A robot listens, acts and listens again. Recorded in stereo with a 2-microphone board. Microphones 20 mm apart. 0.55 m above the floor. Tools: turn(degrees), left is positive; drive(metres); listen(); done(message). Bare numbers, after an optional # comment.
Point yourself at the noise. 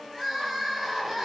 turn(-30)
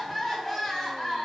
# So it is at 25° left.
turn(25)
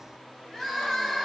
# The crying is now 20° left.
turn(20)
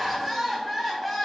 done("Facing the crying.")